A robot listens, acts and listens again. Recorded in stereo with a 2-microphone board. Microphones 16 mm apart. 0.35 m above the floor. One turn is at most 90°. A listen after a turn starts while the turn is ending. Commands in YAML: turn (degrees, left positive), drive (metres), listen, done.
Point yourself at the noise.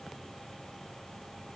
listen: true
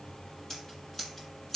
turn: 25
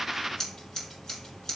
turn: 90
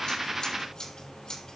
turn: 65
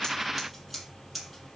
done: "Facing the scissors."